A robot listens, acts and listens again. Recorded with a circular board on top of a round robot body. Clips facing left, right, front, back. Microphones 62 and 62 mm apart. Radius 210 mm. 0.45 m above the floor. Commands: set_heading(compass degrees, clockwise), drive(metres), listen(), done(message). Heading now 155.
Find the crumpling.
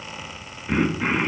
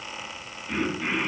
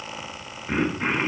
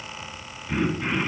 listen()
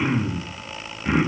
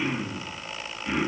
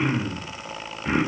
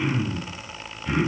listen()
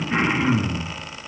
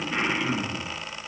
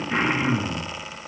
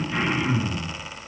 done("I can't make out crumpling to turn to.")